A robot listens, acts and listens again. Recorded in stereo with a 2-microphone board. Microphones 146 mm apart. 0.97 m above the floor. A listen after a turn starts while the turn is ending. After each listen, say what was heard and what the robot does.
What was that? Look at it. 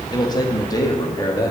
The man speaking: about 25° left or 155° left. Turn 25° left.
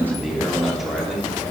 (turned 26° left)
Facing the man speaking, 2 to 4 m away.